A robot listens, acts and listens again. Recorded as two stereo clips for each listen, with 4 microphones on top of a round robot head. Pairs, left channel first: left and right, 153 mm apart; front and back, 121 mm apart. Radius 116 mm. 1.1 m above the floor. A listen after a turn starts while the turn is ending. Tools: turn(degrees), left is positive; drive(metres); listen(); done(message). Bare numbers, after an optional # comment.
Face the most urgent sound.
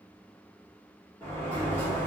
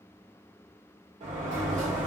listen()
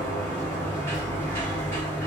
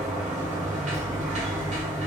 listen()
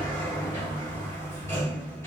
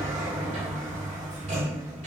done("I can't make out anything urgent to turn to.")